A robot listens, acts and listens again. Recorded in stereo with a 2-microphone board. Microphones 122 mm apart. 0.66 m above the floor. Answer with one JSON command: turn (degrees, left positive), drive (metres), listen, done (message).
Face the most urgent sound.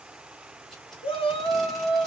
{"turn": 50}
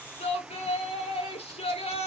{"turn": 70}
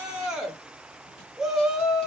{"done": "Found it: a shout, straight ahead, under 1 m away."}